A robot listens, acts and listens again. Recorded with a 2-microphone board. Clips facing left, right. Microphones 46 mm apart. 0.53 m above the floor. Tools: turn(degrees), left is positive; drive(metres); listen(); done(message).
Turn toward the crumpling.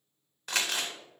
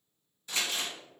turn(degrees=70)
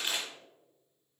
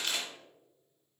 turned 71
turn(degrees=25)
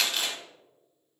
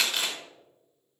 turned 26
done("Found it: crumpling, straight ahead, under 1 m away.")